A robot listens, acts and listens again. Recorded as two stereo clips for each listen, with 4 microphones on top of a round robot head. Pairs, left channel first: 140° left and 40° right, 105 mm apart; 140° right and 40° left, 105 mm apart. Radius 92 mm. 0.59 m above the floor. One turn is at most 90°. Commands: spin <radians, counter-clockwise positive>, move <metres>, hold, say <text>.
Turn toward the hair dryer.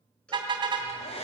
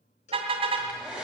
spin 1.57
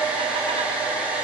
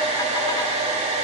spin 0.61
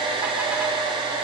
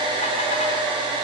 say Facing the hair dryer, over 4 m away.